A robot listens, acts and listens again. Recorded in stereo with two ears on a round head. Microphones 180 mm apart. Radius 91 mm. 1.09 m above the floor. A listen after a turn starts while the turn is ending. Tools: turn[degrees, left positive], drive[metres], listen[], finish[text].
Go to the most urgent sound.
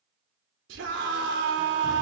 Thought: The scream: about 60° right or 120° right.
Action: turn[-60]
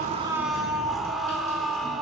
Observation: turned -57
Action: drive[1.0]
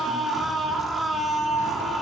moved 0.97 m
Action: drive[1.0]
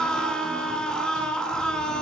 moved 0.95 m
Action: drive[1.0]
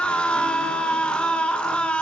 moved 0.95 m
Action: drive[1.0]
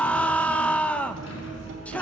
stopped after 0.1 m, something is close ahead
Action: finish[I am next to the scream.]